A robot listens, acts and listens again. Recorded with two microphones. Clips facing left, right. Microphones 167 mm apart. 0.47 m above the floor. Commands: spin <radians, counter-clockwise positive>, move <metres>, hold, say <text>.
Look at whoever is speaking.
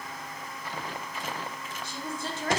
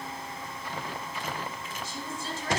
spin 0.96
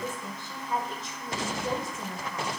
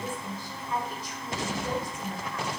spin 0.44
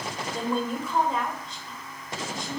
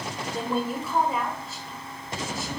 say Found it: a woman speaking, straight ahead, 1 to 2 m away.